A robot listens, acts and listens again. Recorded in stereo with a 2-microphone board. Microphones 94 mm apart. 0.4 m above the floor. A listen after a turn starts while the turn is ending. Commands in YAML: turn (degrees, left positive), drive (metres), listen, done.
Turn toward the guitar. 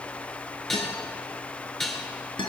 turn: 60
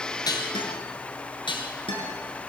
turn: 65
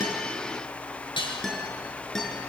done: "Found it: a guitar, straight ahead, over 4 m away."